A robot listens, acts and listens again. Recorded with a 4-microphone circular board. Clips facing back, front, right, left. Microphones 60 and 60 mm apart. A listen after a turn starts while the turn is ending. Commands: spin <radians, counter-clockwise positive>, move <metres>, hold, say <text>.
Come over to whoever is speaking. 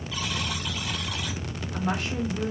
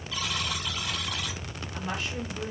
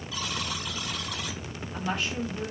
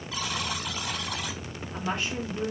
spin 2.62
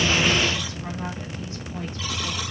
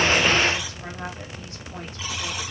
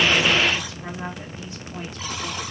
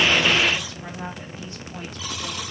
spin -0.17
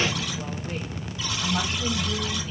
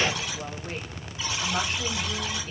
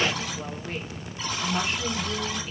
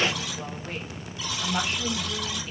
move 1.0
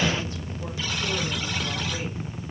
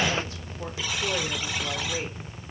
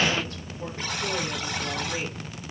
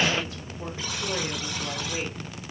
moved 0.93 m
hold
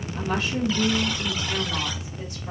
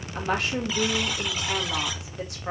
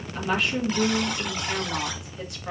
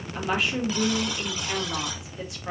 move 1.0
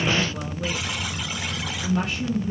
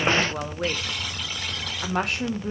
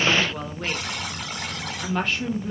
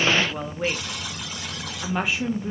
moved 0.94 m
spin 0.17
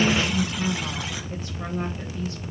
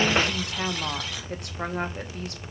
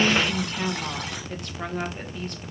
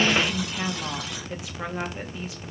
move 1.0
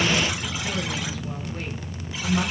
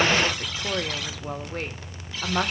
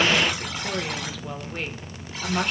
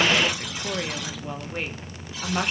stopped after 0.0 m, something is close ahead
spin 0.17
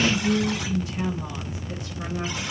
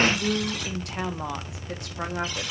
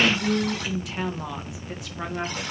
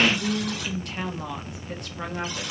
say I am next to the woman speaking.